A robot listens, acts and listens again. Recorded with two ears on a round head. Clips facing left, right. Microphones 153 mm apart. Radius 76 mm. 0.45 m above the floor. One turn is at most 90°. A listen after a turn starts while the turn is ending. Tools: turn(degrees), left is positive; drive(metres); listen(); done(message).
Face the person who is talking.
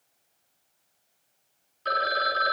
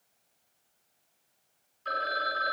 listen()
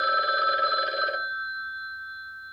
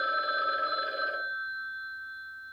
listen()
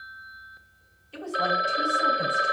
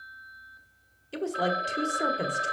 turn(degrees=-60)
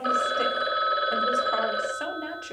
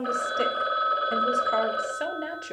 turn(degrees=-25)
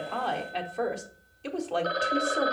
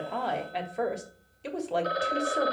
done("Found it: a woman speaking, straight ahead.")